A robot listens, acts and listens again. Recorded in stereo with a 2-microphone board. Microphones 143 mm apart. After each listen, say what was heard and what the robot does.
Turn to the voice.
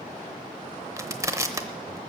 Keep listening.
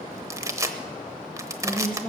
Turn 30° right.
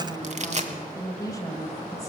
So it is at 25° left. Turn 25° left.
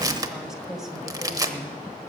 Facing the woman speaking, 1 to 2 m away.